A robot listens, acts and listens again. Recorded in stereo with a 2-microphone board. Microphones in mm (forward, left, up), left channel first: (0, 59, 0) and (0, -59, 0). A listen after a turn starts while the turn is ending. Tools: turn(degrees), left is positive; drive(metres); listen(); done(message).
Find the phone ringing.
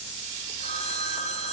turn(degrees=65)
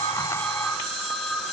done("Found it: a phone ringing, straight ahead, 2 to 4 m away.")